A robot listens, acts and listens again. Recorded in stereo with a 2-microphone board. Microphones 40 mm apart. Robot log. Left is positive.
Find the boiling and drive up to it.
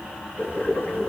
note: The boiling: about 40° left or 140° left.
cmd yaw +40
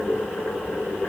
note: So it is at 100° left.
cmd yaw +100
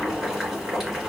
note: The boiling is now 15° right.
cmd yaw -15
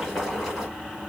cmd fwd 1.0
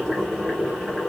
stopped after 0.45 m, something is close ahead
end: Something is in my way. I am facing the boiling but have not reached it.